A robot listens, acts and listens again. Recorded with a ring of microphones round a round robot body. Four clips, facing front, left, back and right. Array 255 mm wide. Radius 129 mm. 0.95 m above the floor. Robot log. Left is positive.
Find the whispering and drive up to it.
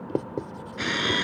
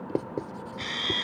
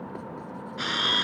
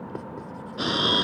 cmd idle
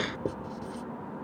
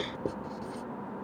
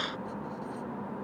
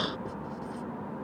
cmd idle
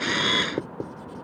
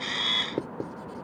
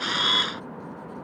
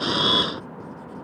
end: I can't make out whispering to turn to.